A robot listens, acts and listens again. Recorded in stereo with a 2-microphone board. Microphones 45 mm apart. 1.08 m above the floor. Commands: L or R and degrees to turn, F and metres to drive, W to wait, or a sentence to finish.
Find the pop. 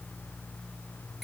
W
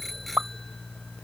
R40
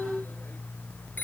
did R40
W
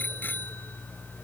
I heard a pop, but can't make it out now. It was about straight ahead or 100° right.